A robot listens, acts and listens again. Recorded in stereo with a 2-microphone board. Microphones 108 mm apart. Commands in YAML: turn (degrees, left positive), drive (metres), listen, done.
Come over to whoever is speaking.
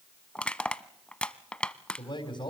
turn: 45
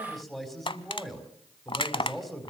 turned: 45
drive: 1.0
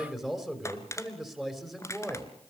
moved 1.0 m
drive: 1.0
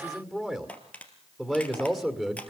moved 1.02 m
drive: 1.0
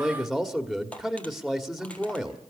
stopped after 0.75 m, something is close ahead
done: "I am next to the man speaking."